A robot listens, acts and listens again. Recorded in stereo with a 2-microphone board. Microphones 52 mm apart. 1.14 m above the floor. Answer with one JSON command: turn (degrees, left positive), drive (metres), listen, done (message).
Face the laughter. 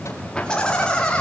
{"turn": 20}
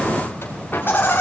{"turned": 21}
{"turn": 140}
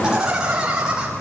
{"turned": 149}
{"turn": -15}
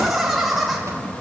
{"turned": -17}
{"done": "Facing the laughter, over 4 m away."}